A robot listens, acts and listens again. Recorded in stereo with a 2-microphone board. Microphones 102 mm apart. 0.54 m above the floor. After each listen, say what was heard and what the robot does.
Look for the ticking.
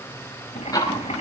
The ticking: about 35° left or 145° left. Turn 35° left.
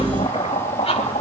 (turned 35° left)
So it is at 110° left. Turn 110° left.
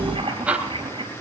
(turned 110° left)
The ticking is now 10° right. Turn 10° right.
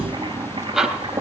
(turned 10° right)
Found it: ticking, straight ahead, 2 to 4 m away.